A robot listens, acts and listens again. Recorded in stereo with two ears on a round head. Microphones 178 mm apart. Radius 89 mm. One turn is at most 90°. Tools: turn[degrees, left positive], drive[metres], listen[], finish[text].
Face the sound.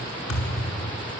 Thought: The thud: about 70° left or 110° left.
Action: turn[70]
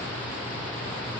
Action: listen[]
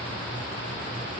Action: finish[I heard a thud, but can't make it out now. It was about straight ahead or 40° left.]